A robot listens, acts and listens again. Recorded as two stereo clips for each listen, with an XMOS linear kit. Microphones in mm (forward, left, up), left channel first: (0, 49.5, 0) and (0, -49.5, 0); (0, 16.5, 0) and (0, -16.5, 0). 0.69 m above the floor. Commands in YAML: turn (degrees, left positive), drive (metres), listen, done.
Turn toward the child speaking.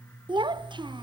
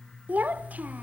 turn: -55
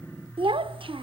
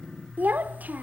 turn: -70
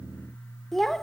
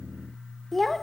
done: "Facing the child speaking, under 1 m away."